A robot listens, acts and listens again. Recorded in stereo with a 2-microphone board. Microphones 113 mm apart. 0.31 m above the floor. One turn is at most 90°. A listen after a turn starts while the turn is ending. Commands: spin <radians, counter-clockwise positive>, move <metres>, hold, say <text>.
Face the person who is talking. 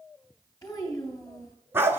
spin 0.52
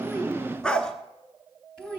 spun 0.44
say Facing the child speaking.